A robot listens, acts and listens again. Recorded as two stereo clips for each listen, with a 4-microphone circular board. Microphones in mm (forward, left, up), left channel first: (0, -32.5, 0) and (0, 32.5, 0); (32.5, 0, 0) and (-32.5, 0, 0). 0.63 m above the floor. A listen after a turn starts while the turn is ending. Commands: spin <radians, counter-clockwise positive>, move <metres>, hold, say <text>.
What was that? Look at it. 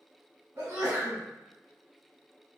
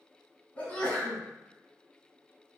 spin 1.13
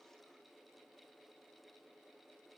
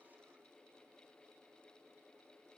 say Facing where the sneeze came from. I can't hear it now.